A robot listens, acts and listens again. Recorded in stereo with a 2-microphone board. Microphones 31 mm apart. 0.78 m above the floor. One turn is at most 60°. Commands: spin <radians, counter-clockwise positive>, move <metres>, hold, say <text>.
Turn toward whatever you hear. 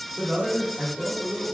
spin -0.79
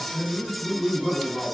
say Facing the man speaking.